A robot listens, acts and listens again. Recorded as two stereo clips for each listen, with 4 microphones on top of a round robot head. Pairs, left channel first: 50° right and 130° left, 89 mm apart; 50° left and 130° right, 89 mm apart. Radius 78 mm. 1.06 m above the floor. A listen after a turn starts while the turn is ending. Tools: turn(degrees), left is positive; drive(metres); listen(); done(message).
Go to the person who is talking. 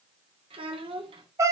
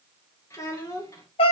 turn(degrees=105)
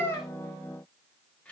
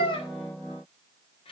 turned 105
turn(degrees=25)
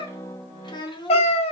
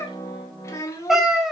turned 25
turn(degrees=-10)
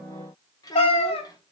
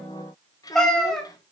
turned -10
drive(metres=1.0)
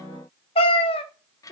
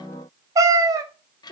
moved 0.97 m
drive(metres=1.0)
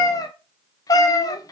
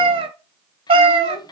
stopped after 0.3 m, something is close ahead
listen()
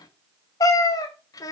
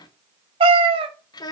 done("Arrived at the child speaking, straight ahead.")